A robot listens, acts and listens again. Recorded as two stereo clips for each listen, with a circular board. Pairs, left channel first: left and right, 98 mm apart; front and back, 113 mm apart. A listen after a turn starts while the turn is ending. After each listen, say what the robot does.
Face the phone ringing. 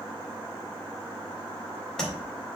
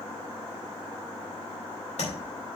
Keep listening.
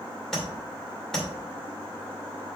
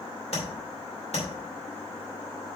Keep listening.
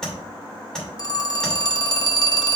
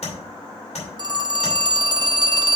Turn 130° left.
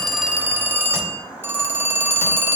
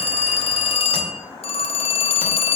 Turn 25° right.
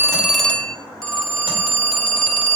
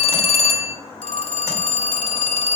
Found it: a phone ringing, straight ahead.